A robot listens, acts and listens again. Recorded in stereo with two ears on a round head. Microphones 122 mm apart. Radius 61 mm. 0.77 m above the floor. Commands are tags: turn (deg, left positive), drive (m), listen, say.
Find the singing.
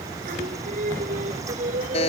<turn deg="-60"/>
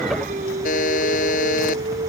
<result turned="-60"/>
<turn deg="-60"/>
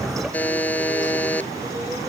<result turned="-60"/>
<listen/>
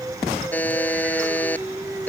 <turn deg="-10"/>
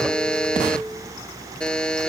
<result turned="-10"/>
<say>Facing the singing.</say>